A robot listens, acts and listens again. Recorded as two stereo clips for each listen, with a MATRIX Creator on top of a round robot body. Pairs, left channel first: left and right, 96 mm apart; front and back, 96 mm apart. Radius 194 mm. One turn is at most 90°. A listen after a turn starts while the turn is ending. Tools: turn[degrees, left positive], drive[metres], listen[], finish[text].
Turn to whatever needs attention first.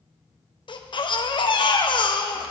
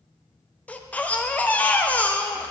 Thought: The baby crying: 75° left.
Action: turn[75]
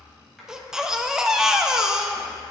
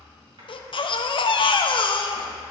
Action: finish[Found it: a baby crying, straight ahead.]